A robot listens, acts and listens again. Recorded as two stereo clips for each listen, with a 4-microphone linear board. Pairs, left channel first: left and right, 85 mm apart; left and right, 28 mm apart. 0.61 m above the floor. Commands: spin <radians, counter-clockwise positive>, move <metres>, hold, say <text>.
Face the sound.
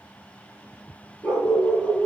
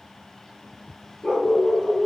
spin 0.52
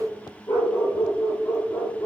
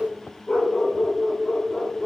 spin 2.53
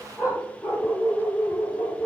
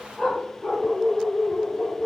spin 0.70
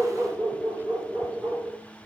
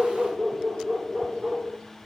spin 0.17
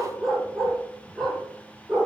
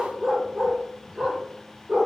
say Facing the dog barking, over 4 m away.